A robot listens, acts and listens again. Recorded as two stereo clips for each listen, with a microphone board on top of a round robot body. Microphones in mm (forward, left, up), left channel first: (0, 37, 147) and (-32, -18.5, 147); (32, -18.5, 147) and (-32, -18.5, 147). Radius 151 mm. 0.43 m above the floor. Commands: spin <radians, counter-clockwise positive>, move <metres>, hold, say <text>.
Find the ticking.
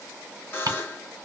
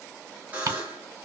spin -2.53
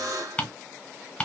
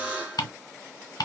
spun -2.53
spin -0.26
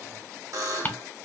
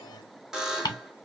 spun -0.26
say Found it: ticking, straight ahead.